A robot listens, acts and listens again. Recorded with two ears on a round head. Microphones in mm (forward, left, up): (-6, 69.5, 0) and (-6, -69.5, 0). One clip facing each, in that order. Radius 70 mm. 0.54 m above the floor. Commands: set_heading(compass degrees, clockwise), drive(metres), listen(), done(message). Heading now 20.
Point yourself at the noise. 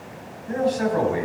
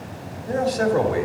set_heading(75)
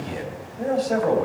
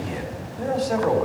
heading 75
done("Facing the man speaking.")